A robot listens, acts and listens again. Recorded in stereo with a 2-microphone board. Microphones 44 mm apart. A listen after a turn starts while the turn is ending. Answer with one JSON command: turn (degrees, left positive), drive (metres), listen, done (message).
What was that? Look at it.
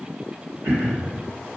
{"turn": -65}
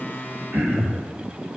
{"turn": -45}
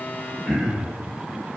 {"done": "Facing the throat clearing, 1 to 2 m away."}